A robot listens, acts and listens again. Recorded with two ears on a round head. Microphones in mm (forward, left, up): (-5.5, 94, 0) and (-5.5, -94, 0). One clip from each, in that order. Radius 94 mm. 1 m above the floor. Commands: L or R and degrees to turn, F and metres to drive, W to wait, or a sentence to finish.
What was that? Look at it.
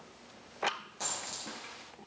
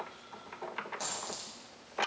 R30
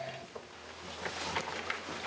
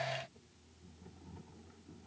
W
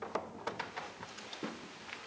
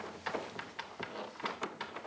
I heard a dropped coin, but can't make it out now. It was about 20° left or 140° right.